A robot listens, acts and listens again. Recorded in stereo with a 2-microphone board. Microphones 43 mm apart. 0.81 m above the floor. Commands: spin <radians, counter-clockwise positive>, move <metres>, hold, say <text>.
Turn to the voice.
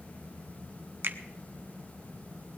hold
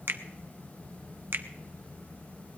hold
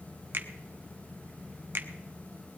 say I can't make out anyone speaking, only a finger snap.